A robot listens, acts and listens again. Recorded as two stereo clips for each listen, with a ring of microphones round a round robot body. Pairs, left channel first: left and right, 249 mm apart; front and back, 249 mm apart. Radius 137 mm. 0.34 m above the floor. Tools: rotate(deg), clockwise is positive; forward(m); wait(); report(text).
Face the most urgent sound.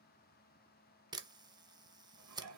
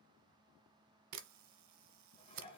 wait()
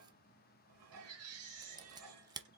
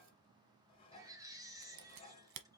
rotate(105)
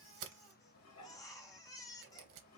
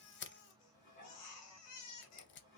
rotate(-15)
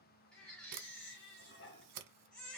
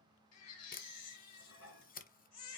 report("Found it: a baby crying, straight ahead, 1 to 2 m away.")